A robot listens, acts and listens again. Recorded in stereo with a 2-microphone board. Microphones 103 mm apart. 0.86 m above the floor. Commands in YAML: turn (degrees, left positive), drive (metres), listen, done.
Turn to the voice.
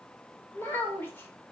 turn: 20
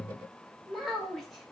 done: "Found it: a child speaking, straight ahead."